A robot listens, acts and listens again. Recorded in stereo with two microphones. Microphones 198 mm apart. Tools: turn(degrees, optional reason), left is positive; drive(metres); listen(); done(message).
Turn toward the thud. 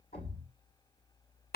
turn(degrees=45, reason="The thud: about 45° left or 135° left.")
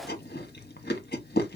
listen()
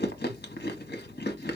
done("I heard a thud, but can't make it out now. It was about straight ahead or 90° left.")